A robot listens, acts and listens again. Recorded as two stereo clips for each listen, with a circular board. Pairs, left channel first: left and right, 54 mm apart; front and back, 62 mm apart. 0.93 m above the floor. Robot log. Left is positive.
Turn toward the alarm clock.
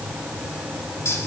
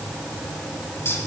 cmd idle
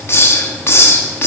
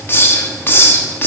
cmd idle
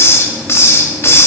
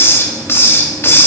end: I can't make out an alarm clock to turn to.